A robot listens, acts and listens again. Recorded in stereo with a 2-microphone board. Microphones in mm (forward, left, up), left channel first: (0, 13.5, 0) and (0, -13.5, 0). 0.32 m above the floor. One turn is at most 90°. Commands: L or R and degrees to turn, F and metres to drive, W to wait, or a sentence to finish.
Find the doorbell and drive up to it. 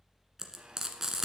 W
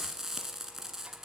W
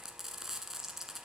I can't make out a doorbell to turn to.